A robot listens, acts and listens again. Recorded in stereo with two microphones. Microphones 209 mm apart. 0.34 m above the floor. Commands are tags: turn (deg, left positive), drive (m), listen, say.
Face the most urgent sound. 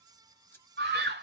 <turn deg="-60"/>
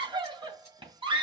<turn deg="-30"/>
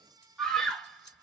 <say>Found it: a scream, straight ahead.</say>